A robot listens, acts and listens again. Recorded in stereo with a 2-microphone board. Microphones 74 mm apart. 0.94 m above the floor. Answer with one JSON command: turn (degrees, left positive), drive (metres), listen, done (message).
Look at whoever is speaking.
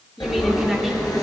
{"turn": 30}
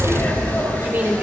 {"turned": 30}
{"turn": -30}
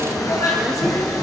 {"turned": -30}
{"listen": true}
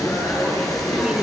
{"listen": true}
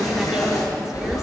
{"done": "I heard a woman speaking from this way, but can't make it out now."}